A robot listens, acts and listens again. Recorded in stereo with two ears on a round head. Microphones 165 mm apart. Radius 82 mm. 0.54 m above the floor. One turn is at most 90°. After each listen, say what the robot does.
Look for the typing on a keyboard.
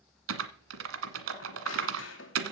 Turn 90° right.
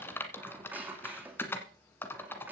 Turn 15° left.
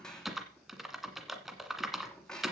Facing the typing on a keyboard.